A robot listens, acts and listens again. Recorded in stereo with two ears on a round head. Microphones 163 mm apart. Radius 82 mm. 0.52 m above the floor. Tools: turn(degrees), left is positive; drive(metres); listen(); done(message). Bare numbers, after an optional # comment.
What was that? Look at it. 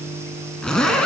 turn(30)
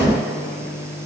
listen()
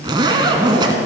# So it is at 25° right.
turn(-25)
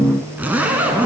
# The zipper is now 10° right.
turn(-10)
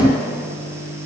listen()
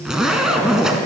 done("Found it: a zipper, straight ahead.")